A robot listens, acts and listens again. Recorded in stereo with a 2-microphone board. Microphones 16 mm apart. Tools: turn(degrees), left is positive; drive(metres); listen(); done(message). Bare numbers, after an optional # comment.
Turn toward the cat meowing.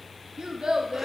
listen()
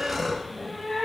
# The cat meowing: about 70° left or 110° left.
turn(70)
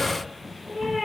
done("Facing the cat meowing.")